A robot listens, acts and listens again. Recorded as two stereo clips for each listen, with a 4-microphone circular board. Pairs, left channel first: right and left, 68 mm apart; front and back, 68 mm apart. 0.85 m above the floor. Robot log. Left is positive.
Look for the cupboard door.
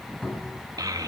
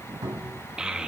note: The cupboard door: 165° right.
cmd yaw -165
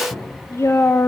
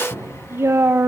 note: The cupboard door is now 40° right.
cmd yaw -40
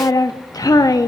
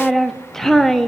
cmd idle
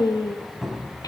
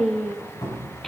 note: The cupboard door is now 10° left.
cmd yaw +10
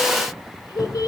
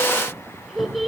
end: Found it: a cupboard door, straight ahead, 2 to 4 m away.